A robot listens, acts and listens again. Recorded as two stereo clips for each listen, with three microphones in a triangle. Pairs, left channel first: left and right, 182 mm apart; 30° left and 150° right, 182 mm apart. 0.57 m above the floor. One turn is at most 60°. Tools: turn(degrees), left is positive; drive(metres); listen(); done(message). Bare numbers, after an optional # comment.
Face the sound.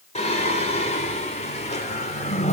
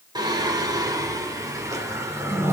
# The singing: 135° left.
turn(60)
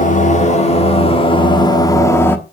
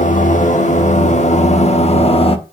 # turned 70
# The singing is now 25° left.
turn(25)
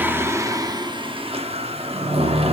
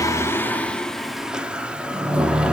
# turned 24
# The singing is now 70° right.
turn(-60)
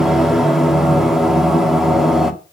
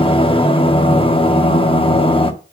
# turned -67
done("Facing the singing.")